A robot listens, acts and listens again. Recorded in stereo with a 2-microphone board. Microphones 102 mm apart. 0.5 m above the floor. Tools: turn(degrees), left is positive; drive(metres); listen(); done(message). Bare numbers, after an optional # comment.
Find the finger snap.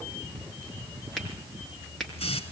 turn(30)
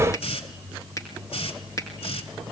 # So it is at 145° left.
turn(145)
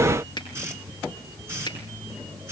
# The finger snap is now 45° left.
turn(45)
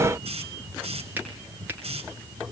# The finger snap is now 20° right.
turn(-20)
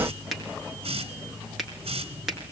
done("Found it: a finger snap, straight ahead.")